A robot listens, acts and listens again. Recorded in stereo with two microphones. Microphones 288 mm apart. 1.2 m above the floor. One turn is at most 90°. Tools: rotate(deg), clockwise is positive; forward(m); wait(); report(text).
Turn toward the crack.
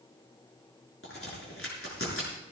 rotate(-50)
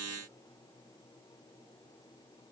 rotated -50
wait()
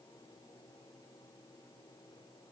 report("I heard a crack, but can't make it out now. It was about straight ahead or 80° left.")